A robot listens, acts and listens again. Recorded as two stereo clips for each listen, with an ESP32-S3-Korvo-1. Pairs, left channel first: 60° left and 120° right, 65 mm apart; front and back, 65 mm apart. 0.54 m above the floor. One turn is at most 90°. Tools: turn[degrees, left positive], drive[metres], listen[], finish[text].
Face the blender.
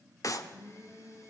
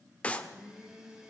Thought: The blender: 100° left.
Action: turn[90]
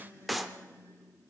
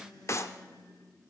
Action: finish[Facing the blender, 2 to 4 m away.]